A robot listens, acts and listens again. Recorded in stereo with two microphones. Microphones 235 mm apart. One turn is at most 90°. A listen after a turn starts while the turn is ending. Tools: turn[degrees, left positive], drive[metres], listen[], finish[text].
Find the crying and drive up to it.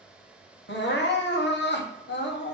Thought: The crying: about 55° left or 125° left.
Action: turn[55]
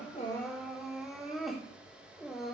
Action: drive[1.0]
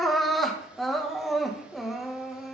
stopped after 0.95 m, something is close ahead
Action: finish[Arrived at the crying, straight ahead.]